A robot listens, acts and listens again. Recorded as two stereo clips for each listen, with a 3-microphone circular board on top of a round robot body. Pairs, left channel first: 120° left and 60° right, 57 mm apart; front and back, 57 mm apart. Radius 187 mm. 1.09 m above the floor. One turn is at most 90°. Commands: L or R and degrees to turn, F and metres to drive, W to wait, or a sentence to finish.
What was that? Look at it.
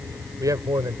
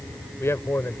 R40
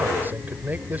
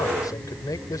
Found it: a man speaking, straight ahead.